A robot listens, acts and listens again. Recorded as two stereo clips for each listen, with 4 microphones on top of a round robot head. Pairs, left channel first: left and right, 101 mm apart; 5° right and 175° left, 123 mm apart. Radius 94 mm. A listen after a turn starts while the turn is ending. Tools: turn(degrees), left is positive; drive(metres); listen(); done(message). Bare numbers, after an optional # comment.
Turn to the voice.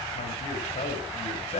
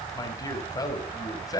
# The man speaking: 55° left.
turn(55)
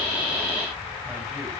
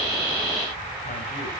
listen()
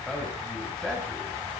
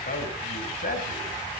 done("Facing the man speaking, over 4 m away.")